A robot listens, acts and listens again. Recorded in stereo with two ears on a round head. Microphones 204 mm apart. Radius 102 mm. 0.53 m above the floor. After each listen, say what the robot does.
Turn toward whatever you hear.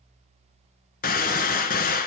Turn 40° left.
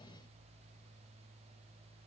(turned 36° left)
Keep listening.
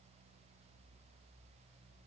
I heard a gunshot, but can't make it out now. It was about 5° left or 105° left.